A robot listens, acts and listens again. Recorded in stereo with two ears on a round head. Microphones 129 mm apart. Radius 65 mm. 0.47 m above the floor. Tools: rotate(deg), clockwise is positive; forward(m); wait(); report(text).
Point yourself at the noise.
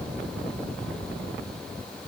wait()
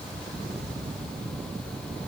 wait()
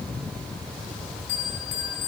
rotate(-60)
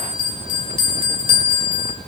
rotate(-45)
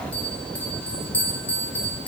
rotate(-15)
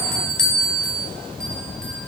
report("Found it: a bell, straight ahead, 1 to 2 m away.")